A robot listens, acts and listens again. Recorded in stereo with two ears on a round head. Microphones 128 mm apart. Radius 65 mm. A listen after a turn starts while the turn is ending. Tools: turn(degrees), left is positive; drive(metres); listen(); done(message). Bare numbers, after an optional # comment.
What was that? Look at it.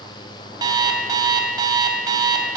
# The alarm clock: about 30° right or 150° right.
turn(-30)
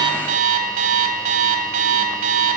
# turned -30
# So it is at 120° right.
turn(-120)
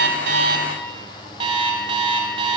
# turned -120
# The alarm clock is now 35° right.
turn(-35)
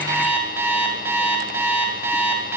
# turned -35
# The alarm clock is now 15° right.
turn(-15)
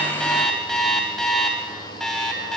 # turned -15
done("Found it: an alarm clock, straight ahead.")